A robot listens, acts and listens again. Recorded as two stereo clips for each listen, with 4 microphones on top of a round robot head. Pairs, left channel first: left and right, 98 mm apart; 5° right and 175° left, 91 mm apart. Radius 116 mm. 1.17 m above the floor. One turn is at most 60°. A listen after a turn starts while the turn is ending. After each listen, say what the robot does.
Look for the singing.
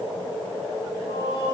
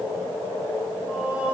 Turn 60° left.
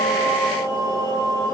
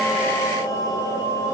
Turn 40° left.
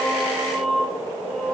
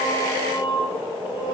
Turn 10° left.
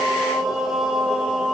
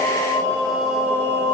Facing the singing, 2 to 4 m away.